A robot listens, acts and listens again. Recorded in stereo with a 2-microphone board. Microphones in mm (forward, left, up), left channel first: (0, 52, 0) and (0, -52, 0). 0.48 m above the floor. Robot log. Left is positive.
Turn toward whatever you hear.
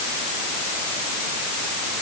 cmd idle
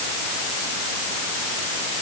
cmd idle
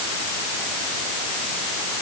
end: I can't make out anything to turn to.